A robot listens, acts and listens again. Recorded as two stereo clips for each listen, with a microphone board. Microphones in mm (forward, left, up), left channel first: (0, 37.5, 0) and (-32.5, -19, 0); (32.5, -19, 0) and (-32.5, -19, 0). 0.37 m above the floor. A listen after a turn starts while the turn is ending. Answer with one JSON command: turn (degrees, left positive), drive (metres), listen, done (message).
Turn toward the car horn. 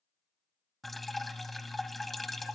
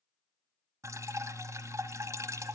{"listen": true}
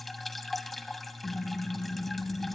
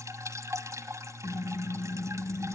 {"turn": 95}
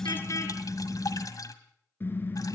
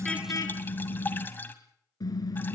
{"done": "Facing the car horn, 2 to 4 m away."}